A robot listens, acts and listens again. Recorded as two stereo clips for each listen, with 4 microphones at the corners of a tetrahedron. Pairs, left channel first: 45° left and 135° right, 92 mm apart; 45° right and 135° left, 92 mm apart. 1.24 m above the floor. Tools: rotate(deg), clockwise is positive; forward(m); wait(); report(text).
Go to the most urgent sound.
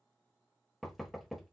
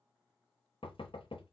wait()
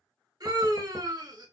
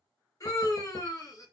rotate(95)
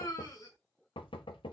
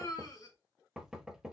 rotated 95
forward(1.0)
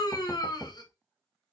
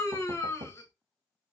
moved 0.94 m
rotate(-10)
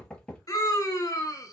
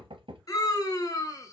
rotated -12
forward(1.0)
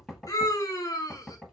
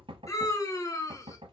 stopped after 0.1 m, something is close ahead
report("I am next to the scream.")